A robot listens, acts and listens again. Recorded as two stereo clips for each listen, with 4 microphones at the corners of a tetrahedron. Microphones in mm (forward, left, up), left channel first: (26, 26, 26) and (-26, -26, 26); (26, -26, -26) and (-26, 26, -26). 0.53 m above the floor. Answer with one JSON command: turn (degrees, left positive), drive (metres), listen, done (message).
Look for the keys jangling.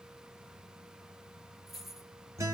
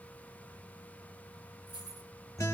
{"turn": 140}
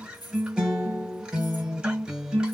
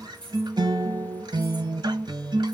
{"turn": 35}
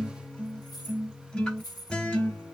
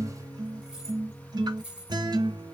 {"turn": 60}
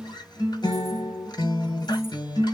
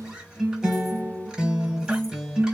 {"listen": true}
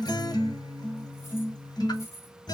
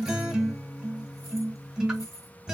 {"turn": -10}
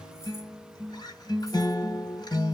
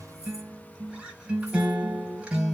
{"listen": true}
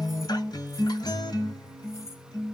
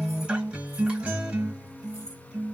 {"listen": true}
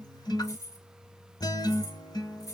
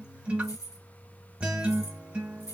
{"done": "Found it: keys jangling, straight ahead."}